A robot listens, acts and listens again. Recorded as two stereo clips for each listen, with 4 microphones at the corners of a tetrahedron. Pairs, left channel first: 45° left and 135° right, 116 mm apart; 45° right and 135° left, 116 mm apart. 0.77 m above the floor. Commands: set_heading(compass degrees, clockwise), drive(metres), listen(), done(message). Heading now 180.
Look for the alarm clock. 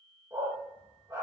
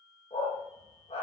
listen()
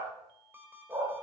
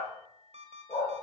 set_heading(25)
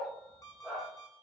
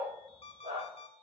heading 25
set_heading(40)
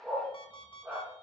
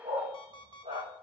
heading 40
done("Found it: an alarm clock, straight ahead, 2 to 4 m away.")